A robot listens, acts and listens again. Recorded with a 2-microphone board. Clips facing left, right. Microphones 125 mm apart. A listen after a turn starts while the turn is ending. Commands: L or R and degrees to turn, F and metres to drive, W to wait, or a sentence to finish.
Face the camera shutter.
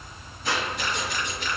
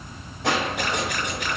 R70
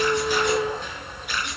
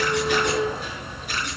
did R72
R40
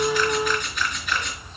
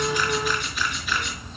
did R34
Facing the camera shutter, over 4 m away.